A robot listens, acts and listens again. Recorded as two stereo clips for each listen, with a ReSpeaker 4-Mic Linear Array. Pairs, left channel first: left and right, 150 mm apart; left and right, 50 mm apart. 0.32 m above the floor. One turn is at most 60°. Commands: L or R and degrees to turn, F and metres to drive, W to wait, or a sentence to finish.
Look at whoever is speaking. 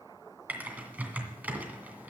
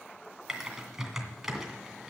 W
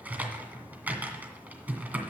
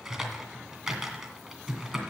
W
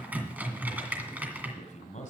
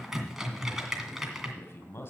L55
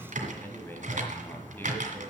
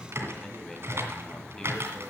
L15
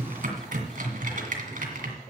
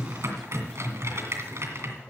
W
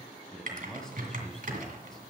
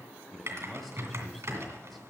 Found it: a man speaking, straight ahead, 1 to 2 m away.